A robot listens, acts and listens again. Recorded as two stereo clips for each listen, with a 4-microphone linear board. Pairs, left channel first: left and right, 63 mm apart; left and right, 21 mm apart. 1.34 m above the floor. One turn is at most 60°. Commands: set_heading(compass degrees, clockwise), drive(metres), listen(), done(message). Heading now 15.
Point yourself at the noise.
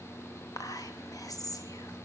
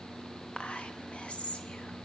set_heading(315)
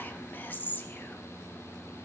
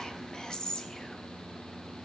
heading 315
set_heading(285)
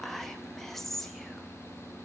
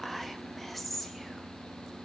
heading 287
done("Facing the whispering.")